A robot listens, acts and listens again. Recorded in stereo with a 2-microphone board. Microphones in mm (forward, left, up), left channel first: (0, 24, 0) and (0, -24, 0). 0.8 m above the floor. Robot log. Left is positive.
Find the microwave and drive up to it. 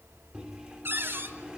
note: The microwave: about 15° right or 165° right.
cmd yaw -15
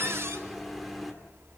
cmd fwd 1.0
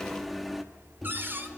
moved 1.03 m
cmd fwd 1.0
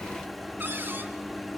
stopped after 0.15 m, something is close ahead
end: I am next to the microwave.